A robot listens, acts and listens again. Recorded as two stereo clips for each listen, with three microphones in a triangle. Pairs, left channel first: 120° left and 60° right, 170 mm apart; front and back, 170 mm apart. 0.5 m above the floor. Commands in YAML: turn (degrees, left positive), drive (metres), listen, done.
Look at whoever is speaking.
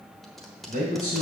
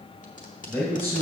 turn: -75
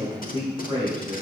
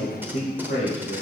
done: "Facing the man speaking, 2 to 4 m away."